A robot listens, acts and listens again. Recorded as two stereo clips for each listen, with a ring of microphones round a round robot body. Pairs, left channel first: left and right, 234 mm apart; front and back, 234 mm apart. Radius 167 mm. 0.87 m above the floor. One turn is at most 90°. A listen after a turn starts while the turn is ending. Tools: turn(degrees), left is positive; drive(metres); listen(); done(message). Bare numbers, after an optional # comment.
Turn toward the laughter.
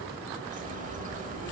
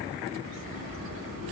listen()
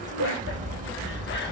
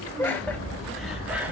# The laughter: 80° left.
turn(80)
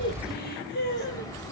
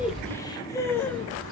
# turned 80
# The laughter is now 80° left.
turn(80)
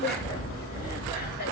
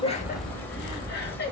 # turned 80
# The laughter is now 40° left.
turn(40)
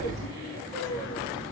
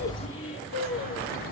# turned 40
# The laughter is now 10° left.
turn(10)
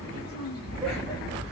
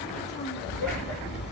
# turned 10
listen()
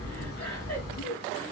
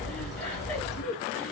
done("Found it: laughter, straight ahead, 1 to 2 m away.")